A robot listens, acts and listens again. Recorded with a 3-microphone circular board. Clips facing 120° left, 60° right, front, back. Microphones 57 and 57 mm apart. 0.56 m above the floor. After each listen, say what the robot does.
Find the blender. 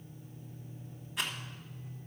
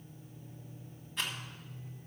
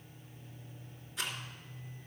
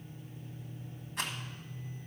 Keep listening.
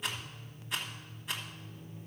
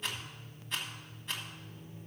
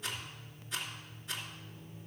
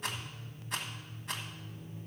Keep listening.
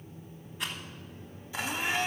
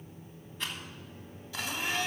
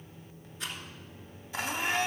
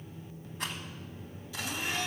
Turn 50° left.
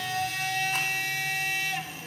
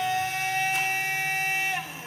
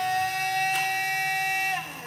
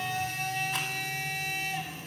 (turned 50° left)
Found it: a blender, straight ahead.